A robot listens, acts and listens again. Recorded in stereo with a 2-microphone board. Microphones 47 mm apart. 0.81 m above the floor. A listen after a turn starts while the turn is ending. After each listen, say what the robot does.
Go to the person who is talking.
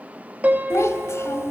Turn 90° left.
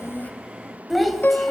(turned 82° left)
Drive 1.0 m forward.
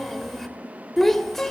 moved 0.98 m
Drive 1.0 m forward.
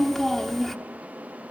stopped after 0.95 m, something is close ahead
Arrived at the child speaking, straight ahead.